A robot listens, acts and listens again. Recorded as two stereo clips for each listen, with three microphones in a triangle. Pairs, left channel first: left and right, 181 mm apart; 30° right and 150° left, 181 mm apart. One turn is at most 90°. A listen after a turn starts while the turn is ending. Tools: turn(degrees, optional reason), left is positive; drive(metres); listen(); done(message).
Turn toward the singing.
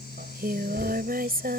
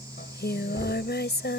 turn(degrees=-55, reason="The singing: 55° right.")
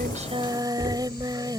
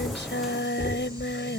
turn(degrees=-20, reason="The singing is now 20° right.")
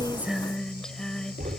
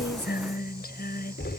done("Found it: singing, straight ahead.")